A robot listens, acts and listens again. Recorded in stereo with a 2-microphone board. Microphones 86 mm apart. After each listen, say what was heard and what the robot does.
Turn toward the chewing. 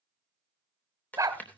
The chewing: about 20° left or 160° left. Turn 20° left.
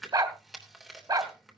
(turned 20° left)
Facing the chewing.